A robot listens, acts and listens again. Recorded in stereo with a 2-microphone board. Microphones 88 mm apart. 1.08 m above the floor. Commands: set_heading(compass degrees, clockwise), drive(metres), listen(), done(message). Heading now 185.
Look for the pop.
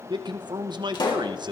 set_heading(125)
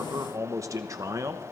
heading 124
listen()
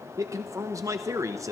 done("I heard a pop, but can't make it out now. It was about 5° right or 60° left.")